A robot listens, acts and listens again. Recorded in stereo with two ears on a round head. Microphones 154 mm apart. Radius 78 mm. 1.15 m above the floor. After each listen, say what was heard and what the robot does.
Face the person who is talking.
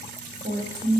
The woman speaking: about 35° right or 145° right. Turn 35° right.
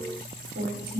So it is at 115° right. Turn 115° right.
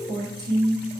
The woman speaking is now 25° right. Turn 25° right.
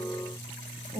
The woman speaking is now 10° right. Turn 10° right.
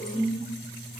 Found it: a woman speaking, straight ahead, 2 to 4 m away.